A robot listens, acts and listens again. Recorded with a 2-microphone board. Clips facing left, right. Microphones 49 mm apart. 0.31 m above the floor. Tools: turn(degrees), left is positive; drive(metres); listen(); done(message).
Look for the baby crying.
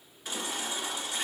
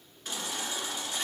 turn(degrees=30)
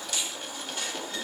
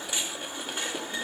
turn(degrees=-25)
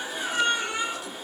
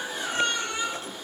done("Found it: a baby crying, straight ahead.")